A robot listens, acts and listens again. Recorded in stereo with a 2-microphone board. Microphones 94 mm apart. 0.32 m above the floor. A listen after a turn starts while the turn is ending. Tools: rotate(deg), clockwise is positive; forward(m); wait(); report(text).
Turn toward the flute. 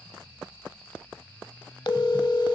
wait()
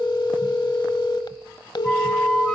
rotate(-30)
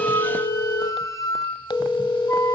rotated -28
rotate(-145)
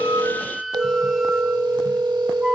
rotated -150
report("Facing the flute, 1 to 2 m away.")